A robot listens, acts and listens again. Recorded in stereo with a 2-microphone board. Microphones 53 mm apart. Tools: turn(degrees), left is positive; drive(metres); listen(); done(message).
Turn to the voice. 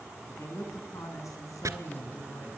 turn(degrees=90)
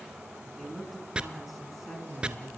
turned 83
done("Facing the woman speaking, over 4 m away.")